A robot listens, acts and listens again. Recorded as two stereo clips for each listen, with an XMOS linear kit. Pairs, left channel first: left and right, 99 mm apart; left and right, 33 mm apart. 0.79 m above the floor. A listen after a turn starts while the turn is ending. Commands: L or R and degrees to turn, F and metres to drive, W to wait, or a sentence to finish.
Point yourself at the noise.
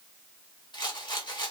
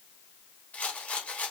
L55
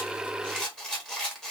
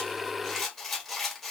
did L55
Facing the rattle, 1 to 2 m away.